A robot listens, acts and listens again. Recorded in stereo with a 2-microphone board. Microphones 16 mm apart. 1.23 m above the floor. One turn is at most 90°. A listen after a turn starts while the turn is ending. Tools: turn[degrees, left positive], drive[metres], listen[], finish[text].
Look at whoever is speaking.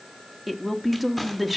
Action: turn[-30]
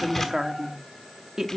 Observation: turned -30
Thought: So it is at 140° right.
Action: turn[-90]
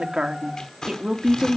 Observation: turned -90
Thought: The woman speaking is now 50° right.
Action: turn[-50]
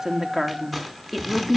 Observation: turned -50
Action: finish[Facing the woman speaking, 2 to 4 m away.]